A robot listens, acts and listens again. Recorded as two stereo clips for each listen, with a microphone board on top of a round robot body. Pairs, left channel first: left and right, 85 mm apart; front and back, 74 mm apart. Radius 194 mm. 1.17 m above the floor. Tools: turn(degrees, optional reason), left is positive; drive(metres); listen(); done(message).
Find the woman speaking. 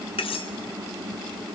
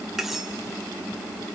listen()
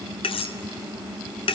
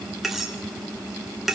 listen()
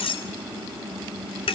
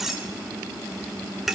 done("I can't make out a woman speaking to turn to.")